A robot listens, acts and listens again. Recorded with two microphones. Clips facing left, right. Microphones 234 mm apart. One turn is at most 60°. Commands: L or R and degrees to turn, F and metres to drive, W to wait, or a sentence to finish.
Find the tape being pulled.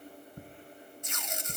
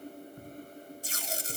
R35
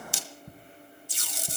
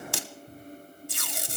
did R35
R60
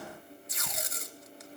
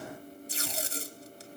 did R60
R30
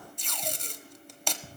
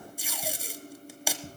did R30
Facing the tape being pulled, under 1 m away.